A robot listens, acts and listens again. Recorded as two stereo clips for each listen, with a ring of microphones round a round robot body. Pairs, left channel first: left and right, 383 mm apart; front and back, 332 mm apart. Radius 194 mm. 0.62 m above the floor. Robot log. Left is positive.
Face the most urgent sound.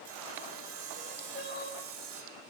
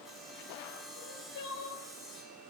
note: The crying: 25° left.
cmd yaw +25
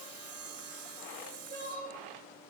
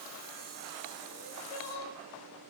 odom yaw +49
note: The crying is now 25° right.
cmd yaw -25
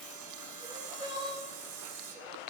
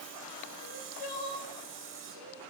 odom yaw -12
note: The crying is now 10° right.
cmd yaw -10
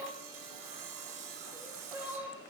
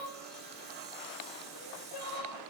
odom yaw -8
end: Found it: crying, straight ahead.